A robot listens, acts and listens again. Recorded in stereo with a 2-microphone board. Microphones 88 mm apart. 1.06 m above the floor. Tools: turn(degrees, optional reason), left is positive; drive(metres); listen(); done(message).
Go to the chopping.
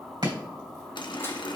turn(degrees=-70, reason="The chopping: about 70° right or 110° right.")
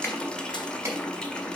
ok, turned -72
turn(degrees=-35, reason="So it is at 35° right.")
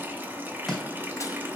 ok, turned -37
drive(metres=1.0)
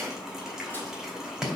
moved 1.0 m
drive(metres=1.0)
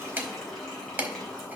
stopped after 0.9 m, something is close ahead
turn(degrees=-25, reason="The chopping is now 25° right.")
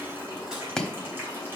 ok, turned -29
done("I am next to the chopping.")